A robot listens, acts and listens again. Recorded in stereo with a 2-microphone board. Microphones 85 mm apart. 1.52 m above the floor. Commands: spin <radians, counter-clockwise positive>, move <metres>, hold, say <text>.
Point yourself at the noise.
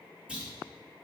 spin -0.52
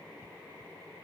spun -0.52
hold
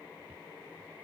say I heard a clunk, but can't make it out now. It was about 15° left or 135° right.